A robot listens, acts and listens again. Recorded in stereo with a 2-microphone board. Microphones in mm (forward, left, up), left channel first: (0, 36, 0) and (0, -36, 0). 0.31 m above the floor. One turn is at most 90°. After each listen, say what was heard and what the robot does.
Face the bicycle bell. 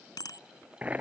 The bicycle bell: about 70° left or 110° left. Turn 70° left.
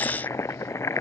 Keep listening.
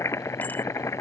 Keep listening.
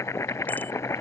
I heard a bicycle bell, but can't make it out now. It was about straight ahead or 40° left.